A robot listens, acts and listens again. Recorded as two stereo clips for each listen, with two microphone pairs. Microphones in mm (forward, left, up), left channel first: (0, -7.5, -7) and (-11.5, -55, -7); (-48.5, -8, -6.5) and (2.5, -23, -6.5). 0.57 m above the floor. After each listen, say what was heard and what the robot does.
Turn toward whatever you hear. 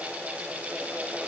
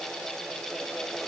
Keep listening.
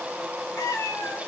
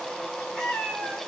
The cat meowing: 90° left. Turn 90° left.
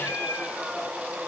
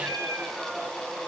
The cat meowing is now 35° left. Turn 35° left.
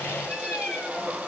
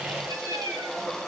Facing the cat meowing.